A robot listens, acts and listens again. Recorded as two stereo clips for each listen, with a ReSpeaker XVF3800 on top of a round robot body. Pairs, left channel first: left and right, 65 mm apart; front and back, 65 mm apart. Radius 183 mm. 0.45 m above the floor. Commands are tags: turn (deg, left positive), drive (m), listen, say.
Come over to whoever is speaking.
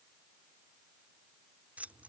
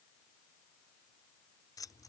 <listen/>
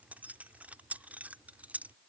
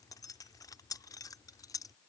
<listen/>
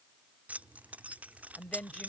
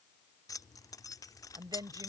<turn deg="165"/>
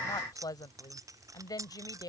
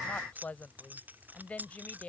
<turn deg="70"/>
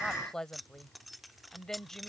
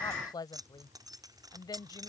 <drive m="1.0"/>
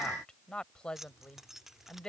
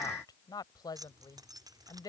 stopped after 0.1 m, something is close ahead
<turn deg="10"/>
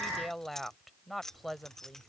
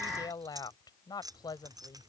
<say>Something is in my way. I am facing the woman speaking but have not reached it.</say>